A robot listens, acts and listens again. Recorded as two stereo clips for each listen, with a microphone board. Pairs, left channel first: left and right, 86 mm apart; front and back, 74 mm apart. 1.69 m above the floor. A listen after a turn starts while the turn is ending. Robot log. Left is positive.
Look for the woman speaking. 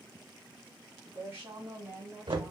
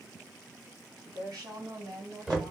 note: The woman speaking: 155° right.
cmd yaw -155
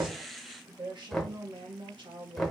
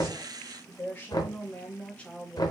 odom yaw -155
note: The woman speaking is now 80° right.
cmd yaw -80
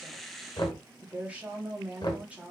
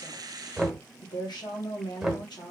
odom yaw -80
note: The woman speaking is now 15° right.
cmd yaw -15
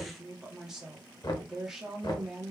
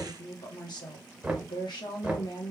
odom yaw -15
end: Found it: a woman speaking, straight ahead, 1 to 2 m away.